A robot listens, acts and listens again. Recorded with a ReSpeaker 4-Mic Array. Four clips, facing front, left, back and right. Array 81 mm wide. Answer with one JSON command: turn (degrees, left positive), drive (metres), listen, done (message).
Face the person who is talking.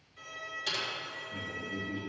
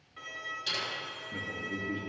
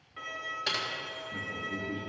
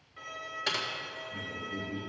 {"turn": 110}
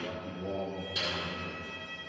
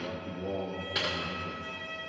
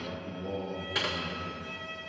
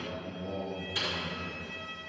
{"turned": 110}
{"turn": 60}
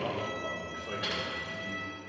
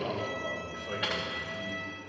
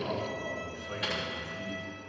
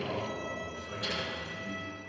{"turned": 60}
{"turn": 25}
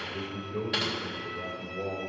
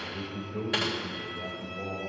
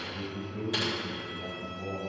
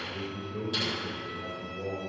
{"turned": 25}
{"done": "Found it: a man speaking, straight ahead."}